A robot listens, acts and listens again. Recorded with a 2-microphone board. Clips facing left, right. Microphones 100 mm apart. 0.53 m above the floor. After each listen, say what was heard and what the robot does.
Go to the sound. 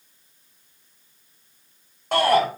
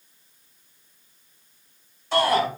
The shout: about 60° left or 120° left. Turn 60° left.
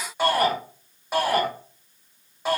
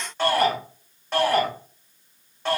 So it is at 10° left. Turn 10° left.
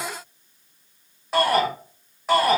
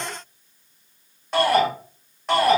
Drive 1.0 m forward.
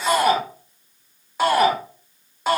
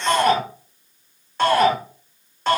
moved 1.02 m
The shout is now 10° left. Turn 10° left.
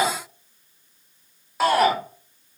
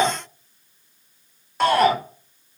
Drive 1.0 m forward.
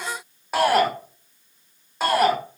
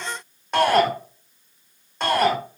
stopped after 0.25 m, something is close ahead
Arrived at the shout, straight ahead.